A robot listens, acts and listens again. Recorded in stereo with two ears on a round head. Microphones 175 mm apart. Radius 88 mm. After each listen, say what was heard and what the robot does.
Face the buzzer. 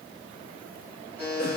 Turn 30° left.
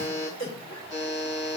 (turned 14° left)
So it is at 160° left. Turn 160° left.
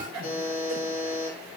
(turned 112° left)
The buzzer is now 50° left. Turn 50° left.
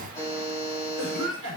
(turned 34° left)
The buzzer is now 15° left. Turn 15° left.
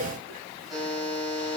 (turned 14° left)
Facing the buzzer, 2 to 4 m away.